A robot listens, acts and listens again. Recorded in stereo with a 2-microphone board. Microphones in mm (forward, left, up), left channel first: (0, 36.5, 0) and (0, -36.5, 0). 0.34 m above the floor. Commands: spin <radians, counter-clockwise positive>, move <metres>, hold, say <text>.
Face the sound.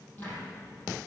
spin 0.44
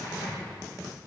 spin 2.27
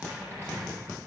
spin 0.52
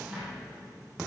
say Facing the cupboard door.